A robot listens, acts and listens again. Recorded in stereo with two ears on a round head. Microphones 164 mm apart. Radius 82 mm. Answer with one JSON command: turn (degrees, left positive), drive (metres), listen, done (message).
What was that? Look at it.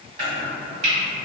{"turn": -40}
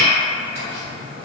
{"turn": -90}
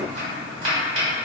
{"turn": -50}
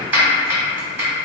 {"turn": -10}
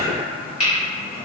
{"done": "Facing the chopping."}